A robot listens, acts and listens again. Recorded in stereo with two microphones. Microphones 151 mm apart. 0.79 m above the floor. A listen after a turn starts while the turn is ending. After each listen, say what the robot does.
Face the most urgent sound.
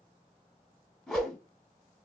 Keep listening.
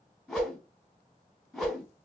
Keep listening.
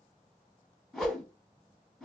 I can't make out anything urgent to turn to.